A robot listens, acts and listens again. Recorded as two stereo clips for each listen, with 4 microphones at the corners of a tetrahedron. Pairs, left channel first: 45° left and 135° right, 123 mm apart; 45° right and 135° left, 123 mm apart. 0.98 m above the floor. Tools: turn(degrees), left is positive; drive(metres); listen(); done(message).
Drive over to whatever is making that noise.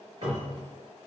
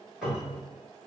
turn(degrees=-140)
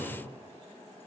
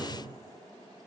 turn(degrees=-50)
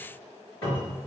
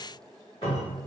drive(metres=1.0)
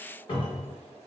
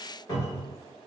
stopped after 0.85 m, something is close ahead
done("I am next to the cupboard door.")